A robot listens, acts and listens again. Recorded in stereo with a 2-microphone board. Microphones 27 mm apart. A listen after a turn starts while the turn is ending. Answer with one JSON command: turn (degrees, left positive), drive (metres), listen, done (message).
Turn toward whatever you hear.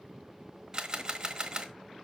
{"turn": -25}
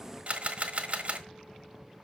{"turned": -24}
{"turn": -125}
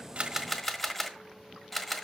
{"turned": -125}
{"done": "Facing the camera shutter, 1 to 2 m away."}